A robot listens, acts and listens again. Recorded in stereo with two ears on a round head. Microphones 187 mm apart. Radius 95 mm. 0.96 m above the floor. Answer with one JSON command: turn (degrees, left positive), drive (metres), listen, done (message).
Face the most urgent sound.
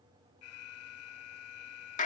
{"turn": 90}
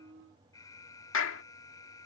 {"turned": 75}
{"turn": 15}
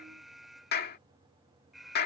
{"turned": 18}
{"done": "Facing the alarm."}